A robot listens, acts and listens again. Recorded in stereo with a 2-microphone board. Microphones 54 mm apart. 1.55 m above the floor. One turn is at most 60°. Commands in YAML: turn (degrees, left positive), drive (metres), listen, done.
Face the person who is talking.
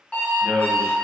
turn: -20
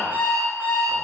listen: true
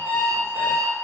listen: true
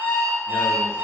done: "I heard a man speaking, but can't make it out now. It was about straight ahead or 140° right."